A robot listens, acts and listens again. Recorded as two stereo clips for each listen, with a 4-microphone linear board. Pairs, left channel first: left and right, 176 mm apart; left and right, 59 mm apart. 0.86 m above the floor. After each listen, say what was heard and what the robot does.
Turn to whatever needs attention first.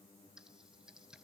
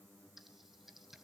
Keep listening.
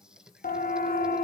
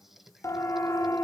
The siren: about 55° left or 125° left. Turn 55° left.
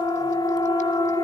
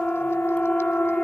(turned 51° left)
So it is at 30° left. Turn 30° left.
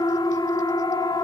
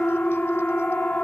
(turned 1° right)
The siren is now 30° left. Turn 30° left.
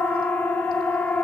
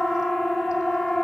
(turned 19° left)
The siren is now 10° left. Turn 10° left.
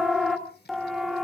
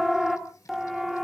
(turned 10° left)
Facing the siren.